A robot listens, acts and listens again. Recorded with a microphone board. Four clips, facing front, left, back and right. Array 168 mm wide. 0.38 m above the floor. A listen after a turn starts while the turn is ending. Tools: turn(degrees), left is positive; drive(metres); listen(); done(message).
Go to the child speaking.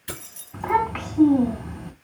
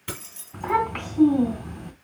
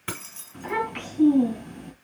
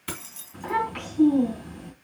turn(degrees=30)
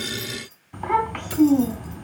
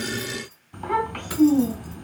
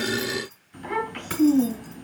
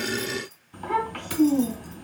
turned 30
turn(degrees=10)
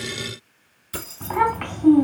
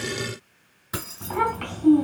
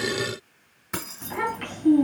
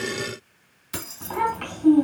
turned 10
drive(metres=1.0)
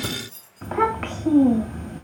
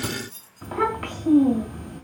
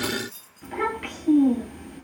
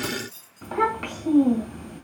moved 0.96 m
drive(metres=1.0)
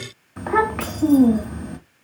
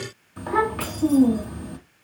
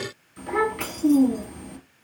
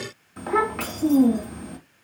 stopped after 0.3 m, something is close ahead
done("I am next to the child speaking.")